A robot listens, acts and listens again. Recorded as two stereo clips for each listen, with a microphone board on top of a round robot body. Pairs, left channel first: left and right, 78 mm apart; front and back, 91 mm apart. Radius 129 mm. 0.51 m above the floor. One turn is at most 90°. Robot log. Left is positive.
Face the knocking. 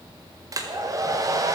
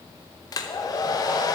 cmd idle
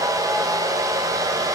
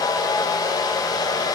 cmd idle
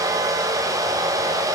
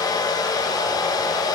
end: I can't make out knocking, only a hair dryer.